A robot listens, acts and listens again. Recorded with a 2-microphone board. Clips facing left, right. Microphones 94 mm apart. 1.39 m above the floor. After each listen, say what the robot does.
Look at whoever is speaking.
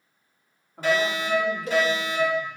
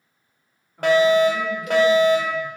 Turn 70° left.
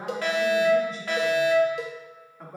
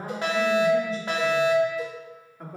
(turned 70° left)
Found it: a woman speaking, straight ahead, 2 to 4 m away.